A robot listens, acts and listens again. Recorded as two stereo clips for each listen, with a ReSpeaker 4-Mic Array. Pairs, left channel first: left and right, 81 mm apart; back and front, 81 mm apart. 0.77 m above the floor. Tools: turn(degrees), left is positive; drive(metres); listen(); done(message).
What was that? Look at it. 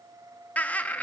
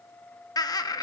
turn(degrees=160)
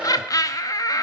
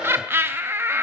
turn(degrees=60)
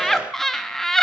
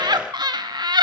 done("Facing the laughter.")